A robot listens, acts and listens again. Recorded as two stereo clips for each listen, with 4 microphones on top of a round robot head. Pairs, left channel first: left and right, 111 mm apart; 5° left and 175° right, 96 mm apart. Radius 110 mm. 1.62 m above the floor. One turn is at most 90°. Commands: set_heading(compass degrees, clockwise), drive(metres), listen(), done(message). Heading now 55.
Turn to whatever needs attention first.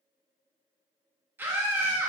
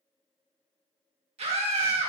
set_heading(145)
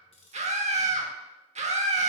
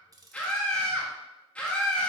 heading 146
set_heading(216)
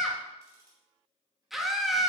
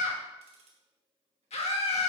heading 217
done("Facing the scream, 1 to 2 m away.")